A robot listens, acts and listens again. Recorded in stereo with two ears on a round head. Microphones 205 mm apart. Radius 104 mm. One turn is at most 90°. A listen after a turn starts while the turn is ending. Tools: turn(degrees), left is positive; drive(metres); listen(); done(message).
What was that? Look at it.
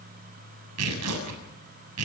turn(degrees=-90)
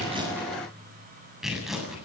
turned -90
done("Facing the tearing paper, over 4 m away.")